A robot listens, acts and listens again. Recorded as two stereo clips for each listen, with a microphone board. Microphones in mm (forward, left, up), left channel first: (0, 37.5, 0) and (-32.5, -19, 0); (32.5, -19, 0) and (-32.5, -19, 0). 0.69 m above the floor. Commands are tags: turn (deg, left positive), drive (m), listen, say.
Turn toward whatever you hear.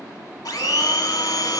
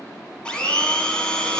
<turn deg="75"/>
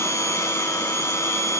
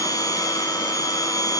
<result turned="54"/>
<turn deg="20"/>
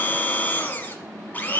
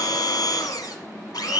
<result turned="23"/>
<say>Found it: a blender, straight ahead.</say>